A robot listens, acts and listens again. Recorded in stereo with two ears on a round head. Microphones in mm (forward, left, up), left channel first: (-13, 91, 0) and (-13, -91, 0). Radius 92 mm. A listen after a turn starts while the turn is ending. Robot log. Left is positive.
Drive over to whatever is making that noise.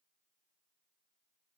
cmd idle
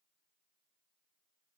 cmd idle
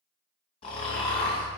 note: The snoring: about 30° left or 150° left.
cmd yaw +30
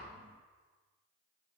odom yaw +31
cmd idle
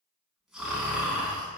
cmd fwd 1.0
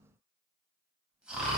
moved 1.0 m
cmd fwd 1.0
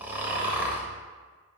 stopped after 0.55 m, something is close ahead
note: The snoring is now 10° right.
cmd yaw -10
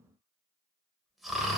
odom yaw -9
end: Arrived at the snoring, straight ahead.